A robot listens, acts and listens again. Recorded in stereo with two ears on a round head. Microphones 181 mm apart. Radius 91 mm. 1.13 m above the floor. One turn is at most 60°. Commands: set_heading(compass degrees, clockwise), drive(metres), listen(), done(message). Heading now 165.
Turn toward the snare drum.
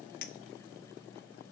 listen()
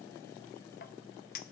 listen()
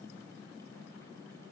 done("I can't make out a snare drum, only a clink.")